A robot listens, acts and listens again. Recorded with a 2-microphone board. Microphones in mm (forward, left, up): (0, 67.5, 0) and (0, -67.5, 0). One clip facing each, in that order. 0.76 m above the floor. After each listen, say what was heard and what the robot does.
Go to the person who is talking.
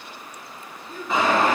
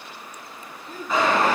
Turn 90° right.
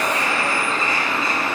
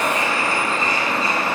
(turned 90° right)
Keep listening.
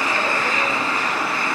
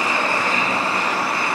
Keep listening.
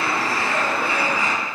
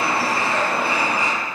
Facing where the child speaking came from. I can't hear it now. I did not reach it.